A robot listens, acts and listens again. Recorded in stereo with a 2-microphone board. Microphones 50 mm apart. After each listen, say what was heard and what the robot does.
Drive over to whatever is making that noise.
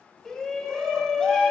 Turn 30° left.
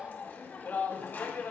So it is at 140° left. Turn 140° left.
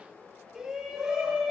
The shout is now 15° right. Turn 15° right.
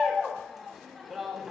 Drive 1.0 m forward.
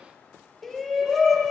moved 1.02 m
Drive 1.0 m forward.
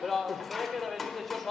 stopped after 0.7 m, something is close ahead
Arrived at the shout, straight ahead.